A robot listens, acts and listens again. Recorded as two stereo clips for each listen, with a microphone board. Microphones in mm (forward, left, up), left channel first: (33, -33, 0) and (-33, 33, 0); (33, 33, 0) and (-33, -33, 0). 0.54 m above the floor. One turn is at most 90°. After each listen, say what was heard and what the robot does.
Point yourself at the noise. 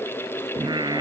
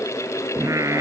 The singing: 170° left. Turn 90° left.
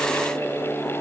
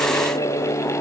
The singing is now 60° left. Turn 60° left.
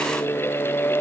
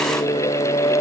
The singing is now 20° left. Turn 20° left.
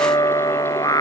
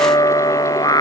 Facing the singing.